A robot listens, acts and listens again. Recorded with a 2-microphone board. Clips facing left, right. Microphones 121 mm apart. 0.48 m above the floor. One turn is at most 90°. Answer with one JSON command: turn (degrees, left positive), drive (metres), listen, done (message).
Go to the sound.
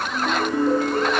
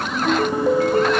{"turn": -55}
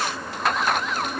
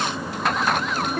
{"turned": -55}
{"turn": -65}
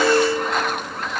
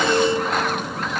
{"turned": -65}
{"turn": -15}
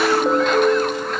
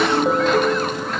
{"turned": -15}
{"drive": 1.0}
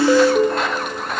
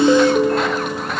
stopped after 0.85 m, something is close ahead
{"done": "Arrived at the ringtone, straight ahead."}